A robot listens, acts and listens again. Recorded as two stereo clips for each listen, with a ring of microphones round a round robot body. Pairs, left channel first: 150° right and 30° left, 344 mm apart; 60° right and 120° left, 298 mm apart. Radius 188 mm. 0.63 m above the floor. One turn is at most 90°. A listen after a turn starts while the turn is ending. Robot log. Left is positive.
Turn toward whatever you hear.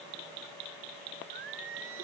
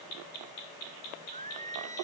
note: The singing: 50° left.
cmd yaw +50
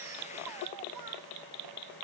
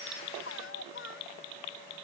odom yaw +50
cmd idle
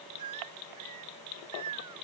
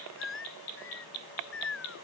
note: The singing is now 10° right.
cmd yaw -10
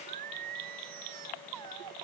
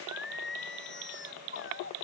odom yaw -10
end: Found it: singing, straight ahead.